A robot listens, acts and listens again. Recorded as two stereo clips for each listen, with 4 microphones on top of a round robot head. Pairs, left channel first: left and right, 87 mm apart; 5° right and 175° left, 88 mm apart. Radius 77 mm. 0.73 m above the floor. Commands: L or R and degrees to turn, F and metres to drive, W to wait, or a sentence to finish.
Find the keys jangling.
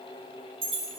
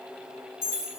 R70
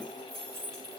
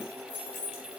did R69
Facing the keys jangling, over 4 m away.